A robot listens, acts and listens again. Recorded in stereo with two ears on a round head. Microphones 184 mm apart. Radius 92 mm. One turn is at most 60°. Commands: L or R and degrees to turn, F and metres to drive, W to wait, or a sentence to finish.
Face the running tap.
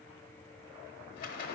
W
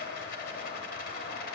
W
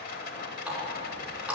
R30
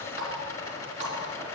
R60
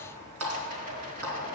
R60
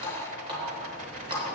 R25
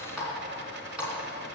Facing the running tap, 2 to 4 m away.